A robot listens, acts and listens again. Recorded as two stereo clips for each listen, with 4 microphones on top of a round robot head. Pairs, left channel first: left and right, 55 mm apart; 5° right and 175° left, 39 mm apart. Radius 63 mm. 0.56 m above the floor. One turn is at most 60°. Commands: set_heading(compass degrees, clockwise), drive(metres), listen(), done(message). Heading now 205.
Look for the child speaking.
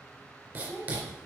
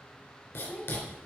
set_heading(145)
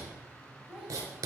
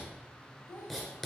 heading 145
set_heading(160)
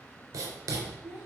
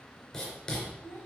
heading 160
set_heading(170)
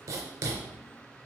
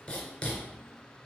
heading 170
listen()
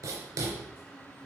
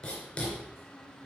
listen()
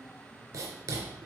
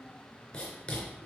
done("I heard a child speaking from this way, but can't make it out now.")